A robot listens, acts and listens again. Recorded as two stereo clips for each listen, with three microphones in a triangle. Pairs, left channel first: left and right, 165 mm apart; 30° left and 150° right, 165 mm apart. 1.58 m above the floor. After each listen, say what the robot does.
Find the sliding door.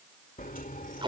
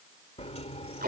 Turn 75° left.
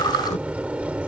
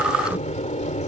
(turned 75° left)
Turn 10° right.
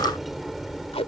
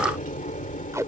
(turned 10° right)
Facing the sliding door.